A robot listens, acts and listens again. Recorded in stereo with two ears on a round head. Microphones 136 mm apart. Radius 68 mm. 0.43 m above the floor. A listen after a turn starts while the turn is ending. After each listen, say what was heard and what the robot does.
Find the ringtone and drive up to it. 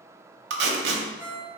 The ringtone: about 20° right or 160° right. Turn 20° right.
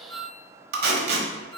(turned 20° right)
So it is at 145° right. Turn 145° right.
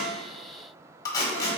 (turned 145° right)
Keep listening.
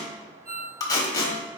The ringtone is now 45° right. Turn 45° right.
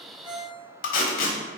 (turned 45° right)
The ringtone is now 10° right. Turn 10° right.
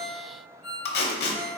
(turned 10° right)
Drive 1.0 m forward.
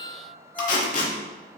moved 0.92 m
The ringtone is now 10° left. Turn 10° left.
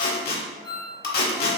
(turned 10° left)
Drive 1.0 m forward.
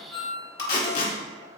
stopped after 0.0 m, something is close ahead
Arrived at the ringtone, straight ahead.